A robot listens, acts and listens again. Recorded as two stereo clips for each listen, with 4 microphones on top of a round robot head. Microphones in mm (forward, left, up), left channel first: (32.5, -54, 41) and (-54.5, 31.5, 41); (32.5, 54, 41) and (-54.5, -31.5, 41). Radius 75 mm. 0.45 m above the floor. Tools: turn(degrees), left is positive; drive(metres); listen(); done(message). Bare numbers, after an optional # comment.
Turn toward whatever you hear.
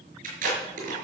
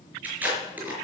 # The tape being pulled: 145° left.
turn(145)
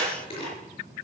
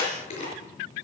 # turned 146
done("Found it: tape being pulled, straight ahead, over 4 m away.")